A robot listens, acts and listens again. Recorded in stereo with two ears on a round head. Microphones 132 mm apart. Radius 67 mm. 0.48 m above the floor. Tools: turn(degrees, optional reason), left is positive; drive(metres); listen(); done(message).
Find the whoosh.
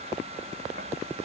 listen()
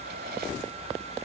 listen()
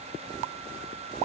done("I can't make out a whoosh.")